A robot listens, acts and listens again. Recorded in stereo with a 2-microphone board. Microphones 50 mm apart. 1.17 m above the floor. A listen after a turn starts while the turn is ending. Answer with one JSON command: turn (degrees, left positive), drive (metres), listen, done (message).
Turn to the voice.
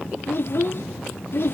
{"turn": 50}
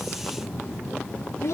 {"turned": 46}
{"turn": 80}
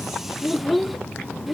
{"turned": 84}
{"done": "Found it: a child speaking, straight ahead."}